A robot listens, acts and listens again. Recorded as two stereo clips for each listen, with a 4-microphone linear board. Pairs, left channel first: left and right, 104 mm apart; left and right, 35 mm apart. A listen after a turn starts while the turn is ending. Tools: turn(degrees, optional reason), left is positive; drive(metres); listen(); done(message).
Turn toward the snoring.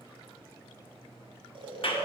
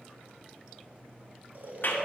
turn(degrees=-55, reason="The snoring: about 55° right or 125° right.")
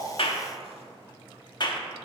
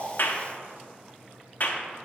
listen()
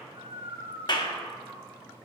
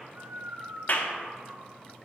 turn(degrees=-70, reason="So it is at 70° right.")
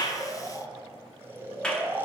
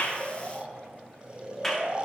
turn(degrees=-25, reason="The snoring is now 25° right.")
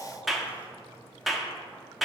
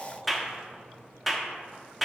listen()
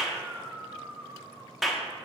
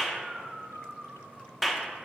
turn(degrees=-15, reason="The snoring is now 15° right.")
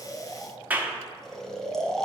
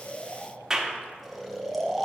done("Found it: snoring, straight ahead.")